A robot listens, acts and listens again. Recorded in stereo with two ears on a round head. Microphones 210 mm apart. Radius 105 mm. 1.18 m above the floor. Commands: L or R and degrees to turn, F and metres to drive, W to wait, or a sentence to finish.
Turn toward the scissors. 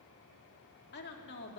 W
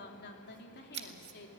R50
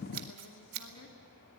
R80
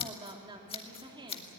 L25
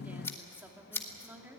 L10
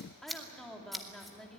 Found it: scissors, straight ahead, 1 to 2 m away.